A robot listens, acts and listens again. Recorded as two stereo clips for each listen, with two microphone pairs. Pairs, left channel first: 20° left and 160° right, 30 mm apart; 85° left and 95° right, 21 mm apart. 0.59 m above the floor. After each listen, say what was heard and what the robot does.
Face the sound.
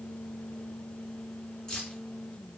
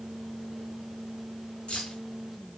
The keys jangling: 95° left. Turn 95° left.
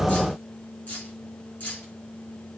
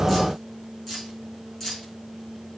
The keys jangling is now 15° left. Turn 15° left.
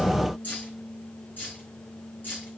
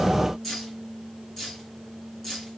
The keys jangling is now 10° left. Turn 10° left.
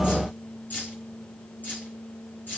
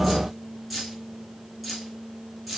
Found it: keys jangling, straight ahead, over 4 m away.